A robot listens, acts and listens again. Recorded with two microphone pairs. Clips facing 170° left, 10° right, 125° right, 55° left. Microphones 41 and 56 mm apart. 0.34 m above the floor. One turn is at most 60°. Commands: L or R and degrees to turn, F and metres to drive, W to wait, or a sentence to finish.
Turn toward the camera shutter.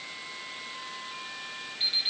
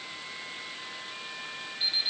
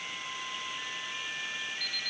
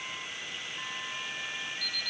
W
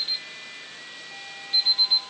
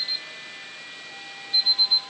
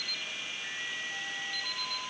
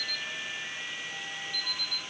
W
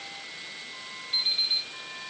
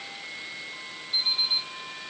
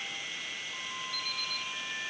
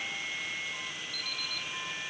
I can't make out a camera shutter to turn to.